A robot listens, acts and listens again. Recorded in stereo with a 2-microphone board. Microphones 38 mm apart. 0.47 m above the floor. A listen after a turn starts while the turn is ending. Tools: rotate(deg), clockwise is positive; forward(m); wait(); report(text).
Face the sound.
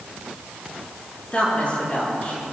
rotate(-35)
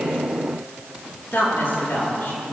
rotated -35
rotate(-110)
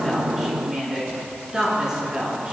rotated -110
rotate(15)
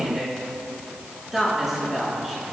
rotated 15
rotate(10)
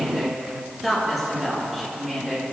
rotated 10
report("Found it: a woman speaking, straight ahead, over 4 m away.")